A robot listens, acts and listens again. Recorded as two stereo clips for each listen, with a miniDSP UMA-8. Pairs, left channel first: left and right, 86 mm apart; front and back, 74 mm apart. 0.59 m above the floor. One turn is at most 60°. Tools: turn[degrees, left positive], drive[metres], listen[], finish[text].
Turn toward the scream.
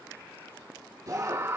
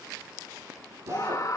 Thought: The scream: 35° right.
Action: turn[-35]
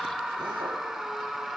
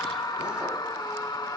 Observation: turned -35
Action: finish[Facing the scream, 2 to 4 m away.]